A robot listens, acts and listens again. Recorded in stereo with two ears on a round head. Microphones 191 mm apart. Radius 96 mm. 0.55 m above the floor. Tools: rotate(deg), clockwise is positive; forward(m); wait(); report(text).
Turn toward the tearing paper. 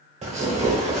rotate(30)
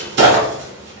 rotate(120)
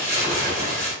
rotate(15)
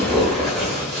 report("Found it: tearing paper, straight ahead, 1 to 2 m away.")